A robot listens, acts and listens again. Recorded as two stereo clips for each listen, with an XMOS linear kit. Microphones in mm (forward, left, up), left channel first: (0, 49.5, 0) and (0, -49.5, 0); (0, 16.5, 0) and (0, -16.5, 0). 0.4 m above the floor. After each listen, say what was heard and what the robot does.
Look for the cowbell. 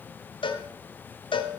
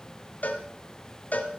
The cowbell: about 55° left or 125° left. Turn 55° left.
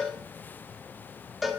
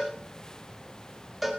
Facing the cowbell, 1 to 2 m away.